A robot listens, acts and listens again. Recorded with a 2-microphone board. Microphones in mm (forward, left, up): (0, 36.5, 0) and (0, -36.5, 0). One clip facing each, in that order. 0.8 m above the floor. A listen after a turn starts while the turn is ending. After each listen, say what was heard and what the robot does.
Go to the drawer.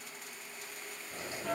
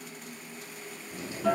The drawer: about 35° left or 145° left. Turn 35° left.
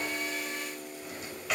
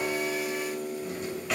Drive 1.0 m forward.
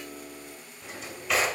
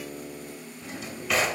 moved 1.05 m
Drive 1.0 m forward.
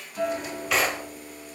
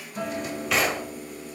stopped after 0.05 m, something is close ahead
I am next to the drawer.